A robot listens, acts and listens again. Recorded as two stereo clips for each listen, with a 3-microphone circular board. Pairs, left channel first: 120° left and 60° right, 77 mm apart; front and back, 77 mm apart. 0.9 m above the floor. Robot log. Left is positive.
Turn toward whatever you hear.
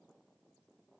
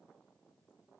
cmd idle
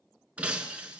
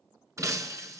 note: The breaking glass: 135° right.
cmd yaw -135
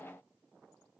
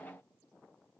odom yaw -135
end: I heard breaking glass from this way, but can't make it out now.